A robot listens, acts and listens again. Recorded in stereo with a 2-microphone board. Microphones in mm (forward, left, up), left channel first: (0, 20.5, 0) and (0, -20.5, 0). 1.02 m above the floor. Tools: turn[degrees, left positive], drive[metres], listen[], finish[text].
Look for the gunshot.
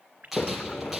Action: turn[-30]
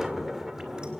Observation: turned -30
Action: listen[]
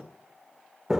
Action: finish[I heard a gunshot, but can't make it out now. It was about 25° left or 145° right.]